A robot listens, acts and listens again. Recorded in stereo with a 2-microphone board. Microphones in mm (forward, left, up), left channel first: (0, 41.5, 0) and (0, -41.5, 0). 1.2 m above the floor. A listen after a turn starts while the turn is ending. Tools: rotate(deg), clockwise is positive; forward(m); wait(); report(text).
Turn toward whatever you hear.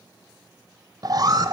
rotate(50)
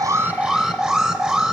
rotate(10)
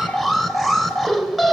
report("Found it: an alarm, straight ahead, 1 to 2 m away.")